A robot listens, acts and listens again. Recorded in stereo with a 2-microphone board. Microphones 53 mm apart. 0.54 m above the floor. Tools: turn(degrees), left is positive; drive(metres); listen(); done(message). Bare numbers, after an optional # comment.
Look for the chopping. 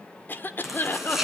turn(-30)
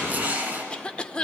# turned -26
# So it is at 150° right.
turn(-150)
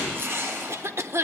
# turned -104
# The chopping is now 45° right.
turn(-45)
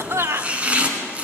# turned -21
# The chopping is now 25° right.
turn(-25)
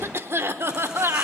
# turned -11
# Nothing new. It was at 15° right.
turn(-15)
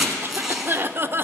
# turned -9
done("Facing the chopping.")